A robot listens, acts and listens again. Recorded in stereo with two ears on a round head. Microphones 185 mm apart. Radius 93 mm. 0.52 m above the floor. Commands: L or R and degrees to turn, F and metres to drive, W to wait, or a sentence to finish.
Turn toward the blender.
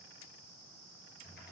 W
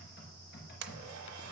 R90
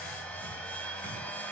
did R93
L10
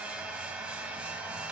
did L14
Found it: a blender, straight ahead.